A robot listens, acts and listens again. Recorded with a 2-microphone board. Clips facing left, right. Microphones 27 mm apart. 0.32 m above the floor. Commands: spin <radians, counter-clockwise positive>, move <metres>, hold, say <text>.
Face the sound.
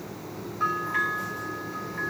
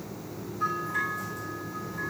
spin 0.61
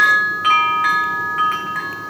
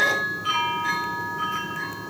spin 1.83
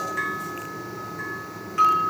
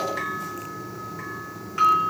spin -0.17
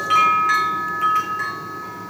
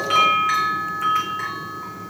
say Found it: a bell, straight ahead, over 4 m away.